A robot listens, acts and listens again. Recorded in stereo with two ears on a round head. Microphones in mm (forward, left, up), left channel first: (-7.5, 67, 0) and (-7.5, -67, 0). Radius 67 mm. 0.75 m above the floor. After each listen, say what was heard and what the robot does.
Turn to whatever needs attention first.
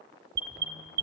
The alarm: about 65° right or 115° right. Turn 65° right.
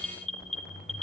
Found it: an alarm, straight ahead, 2 to 4 m away.